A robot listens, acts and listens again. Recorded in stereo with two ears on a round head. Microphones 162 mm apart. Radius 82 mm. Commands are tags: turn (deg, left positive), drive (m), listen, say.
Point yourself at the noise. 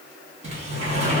<turn deg="-35"/>
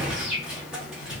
<say>Found it: a sliding door, straight ahead.</say>